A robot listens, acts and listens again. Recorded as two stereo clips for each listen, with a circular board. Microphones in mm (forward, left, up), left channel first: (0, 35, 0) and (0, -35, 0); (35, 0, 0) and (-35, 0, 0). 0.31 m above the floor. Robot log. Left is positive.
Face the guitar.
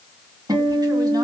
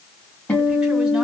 note: The guitar: 70° right.
cmd yaw -70
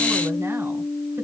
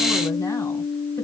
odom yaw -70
end: Found it: a guitar, straight ahead.